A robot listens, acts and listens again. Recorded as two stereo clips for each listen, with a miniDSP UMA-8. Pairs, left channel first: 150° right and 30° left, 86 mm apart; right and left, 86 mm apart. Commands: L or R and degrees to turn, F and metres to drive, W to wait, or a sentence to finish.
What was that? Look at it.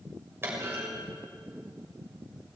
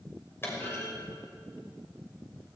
R30
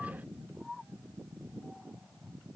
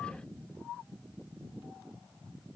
I heard a clunk from this way, but can't make it out now.